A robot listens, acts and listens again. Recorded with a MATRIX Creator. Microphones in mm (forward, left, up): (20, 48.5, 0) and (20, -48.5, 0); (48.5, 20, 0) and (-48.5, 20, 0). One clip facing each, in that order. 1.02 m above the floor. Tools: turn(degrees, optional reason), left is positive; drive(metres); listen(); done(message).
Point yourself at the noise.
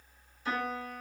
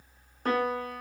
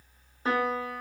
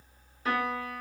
turn(degrees=-60, reason="The piano: 60° right.")
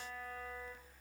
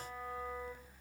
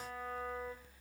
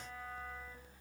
listen()
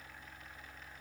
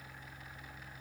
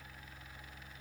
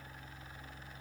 listen()
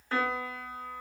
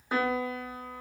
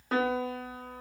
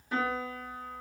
turn(degrees=-15, reason="The piano is now 15° right.")
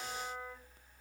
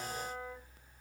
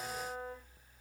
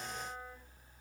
listen()
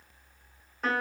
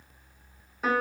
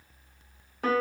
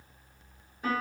done("Facing the piano.")